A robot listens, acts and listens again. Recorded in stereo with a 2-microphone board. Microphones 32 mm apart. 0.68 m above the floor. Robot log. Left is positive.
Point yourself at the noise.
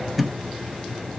cmd yaw +30
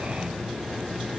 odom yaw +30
cmd idle
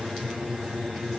end: I heard a thud, but can't make it out now. It was about 30° right or 150° left.